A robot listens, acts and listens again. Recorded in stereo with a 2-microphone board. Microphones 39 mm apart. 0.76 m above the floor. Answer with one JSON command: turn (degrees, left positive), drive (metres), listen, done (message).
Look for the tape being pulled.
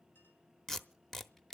{"turn": 30}
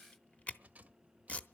{"turn": 140}
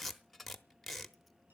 {"done": "Facing the tape being pulled."}